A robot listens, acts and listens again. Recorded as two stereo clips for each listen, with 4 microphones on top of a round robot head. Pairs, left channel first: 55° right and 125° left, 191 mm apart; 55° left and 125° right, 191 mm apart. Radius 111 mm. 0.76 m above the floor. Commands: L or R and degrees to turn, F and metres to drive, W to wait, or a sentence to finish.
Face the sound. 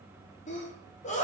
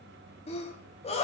Facing the sneeze, 1 to 2 m away.